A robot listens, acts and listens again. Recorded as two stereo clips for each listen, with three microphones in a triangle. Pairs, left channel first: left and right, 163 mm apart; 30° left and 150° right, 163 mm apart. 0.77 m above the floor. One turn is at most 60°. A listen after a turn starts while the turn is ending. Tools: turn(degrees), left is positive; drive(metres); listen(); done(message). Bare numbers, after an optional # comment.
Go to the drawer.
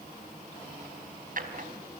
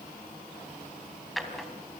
# The drawer: 60° right.
turn(-60)
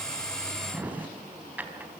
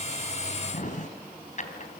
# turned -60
# The drawer is now 10° right.
turn(-10)
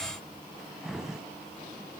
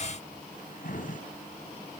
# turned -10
drive(1.0)
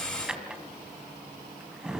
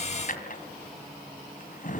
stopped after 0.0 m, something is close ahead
done("Something is in my way. I am facing the drawer but have not reached it.")